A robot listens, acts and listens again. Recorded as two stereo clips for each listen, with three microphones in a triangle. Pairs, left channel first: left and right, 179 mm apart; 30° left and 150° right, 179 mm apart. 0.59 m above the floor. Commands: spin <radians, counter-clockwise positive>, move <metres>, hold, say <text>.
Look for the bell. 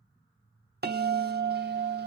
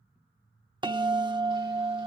spin -1.48
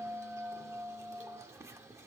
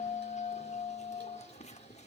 spin -0.35
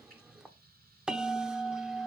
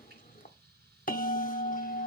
say Found it: a bell, straight ahead.